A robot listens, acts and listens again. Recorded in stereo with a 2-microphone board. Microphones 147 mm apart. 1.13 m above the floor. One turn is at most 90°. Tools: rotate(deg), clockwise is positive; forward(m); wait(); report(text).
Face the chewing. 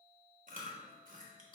rotate(65)
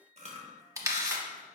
rotate(50)
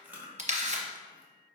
rotate(10)
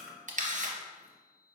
report("Facing the chewing.")